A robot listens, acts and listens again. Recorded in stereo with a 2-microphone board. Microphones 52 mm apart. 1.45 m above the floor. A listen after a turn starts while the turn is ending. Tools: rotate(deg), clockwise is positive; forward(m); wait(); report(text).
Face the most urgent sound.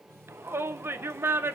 rotate(50)
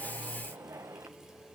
rotate(75)
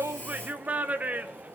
rotate(30)
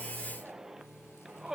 rotate(10)
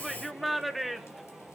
report("Facing the shout.")